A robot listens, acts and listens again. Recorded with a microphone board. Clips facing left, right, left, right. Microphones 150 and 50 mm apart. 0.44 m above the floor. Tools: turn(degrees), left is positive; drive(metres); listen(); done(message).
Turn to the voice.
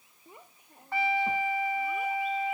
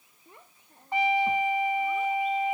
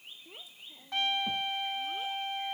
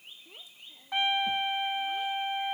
turn(degrees=30)
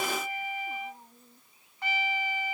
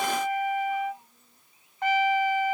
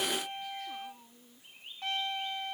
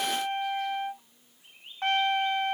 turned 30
turn(degrees=140)
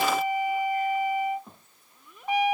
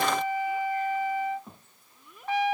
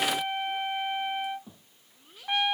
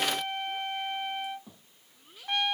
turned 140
done("Found it: a child speaking, straight ahead.")